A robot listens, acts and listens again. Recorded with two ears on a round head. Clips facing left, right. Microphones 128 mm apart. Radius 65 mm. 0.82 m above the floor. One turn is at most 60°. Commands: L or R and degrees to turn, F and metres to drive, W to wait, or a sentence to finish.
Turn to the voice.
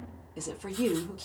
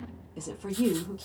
L30
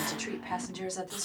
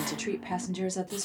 R25
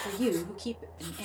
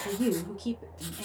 Facing the woman speaking, 1 to 2 m away.